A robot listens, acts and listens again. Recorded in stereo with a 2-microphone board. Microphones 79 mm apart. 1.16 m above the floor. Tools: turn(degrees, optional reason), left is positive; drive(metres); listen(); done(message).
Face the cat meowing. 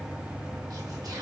listen()
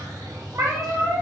turn(degrees=-35, reason="The cat meowing: about 35° right or 145° right.")
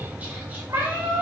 turn(degrees=-40, reason="The cat meowing: about 40° right or 140° right.")
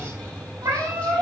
turn(degrees=-130, reason="So it is at 130° right.")
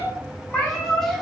turn(degrees=15, reason="The cat meowing is now 15° left.")
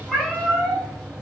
done("Facing the cat meowing.")